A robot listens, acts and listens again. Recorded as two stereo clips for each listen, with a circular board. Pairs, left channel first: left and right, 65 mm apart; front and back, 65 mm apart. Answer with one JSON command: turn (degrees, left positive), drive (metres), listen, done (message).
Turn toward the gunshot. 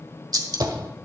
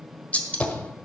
{"turn": -70}
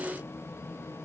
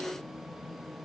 {"done": "I heard a gunshot from this way, but can't make it out now."}